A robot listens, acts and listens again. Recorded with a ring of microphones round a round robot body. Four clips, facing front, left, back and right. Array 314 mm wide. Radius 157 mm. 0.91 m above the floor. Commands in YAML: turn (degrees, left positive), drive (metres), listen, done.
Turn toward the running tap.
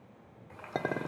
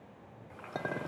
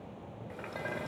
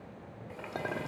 turn: -130
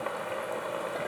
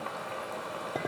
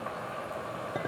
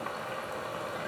turn: -10
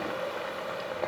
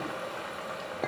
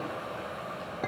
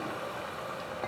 done: "Found it: a running tap, straight ahead."